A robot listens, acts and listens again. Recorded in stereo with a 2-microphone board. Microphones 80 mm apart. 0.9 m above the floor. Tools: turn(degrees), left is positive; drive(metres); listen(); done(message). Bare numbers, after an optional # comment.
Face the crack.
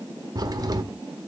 # The crack: about 45° right or 135° right.
turn(-45)
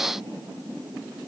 listen()
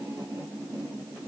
done("I heard a crack, but can't make it out now. It was about straight ahead or 90° right.")